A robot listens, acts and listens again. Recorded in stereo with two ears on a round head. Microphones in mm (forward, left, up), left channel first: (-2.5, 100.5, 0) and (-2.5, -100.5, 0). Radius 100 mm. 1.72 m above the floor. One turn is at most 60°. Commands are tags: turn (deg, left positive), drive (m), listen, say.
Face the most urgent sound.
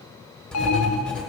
<turn deg="60"/>
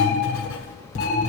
<turn deg="30"/>
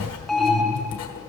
<say>Found it: an alarm, straight ahead, 1 to 2 m away.</say>